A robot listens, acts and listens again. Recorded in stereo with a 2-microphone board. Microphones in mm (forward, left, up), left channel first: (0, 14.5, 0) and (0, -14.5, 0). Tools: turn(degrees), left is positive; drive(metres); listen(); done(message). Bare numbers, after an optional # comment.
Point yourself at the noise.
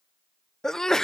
# The sneeze: about 15° left or 165° left.
turn(15)
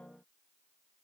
listen()
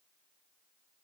done("I heard a sneeze, but can't make it out now. It was about straight ahead or 150° left.")